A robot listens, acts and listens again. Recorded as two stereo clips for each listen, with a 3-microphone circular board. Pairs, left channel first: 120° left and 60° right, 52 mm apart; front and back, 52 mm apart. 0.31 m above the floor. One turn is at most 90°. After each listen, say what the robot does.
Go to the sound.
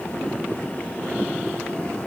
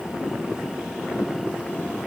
Keep listening.
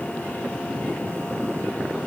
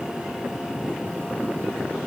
Keep listening.
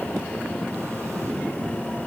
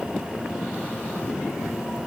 I can't make out anything to turn to.